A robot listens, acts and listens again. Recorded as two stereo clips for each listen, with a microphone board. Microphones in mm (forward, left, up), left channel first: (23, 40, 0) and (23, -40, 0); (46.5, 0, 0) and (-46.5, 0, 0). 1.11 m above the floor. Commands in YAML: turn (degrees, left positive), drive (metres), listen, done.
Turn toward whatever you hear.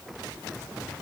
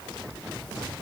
listen: true
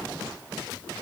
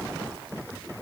listen: true
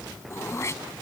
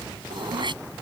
turn: 145
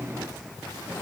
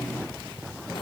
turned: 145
listen: true
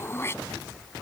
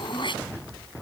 turn: 30
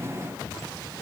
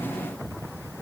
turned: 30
listen: true
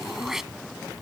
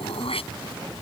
done: "Found it: throat clearing, straight ahead."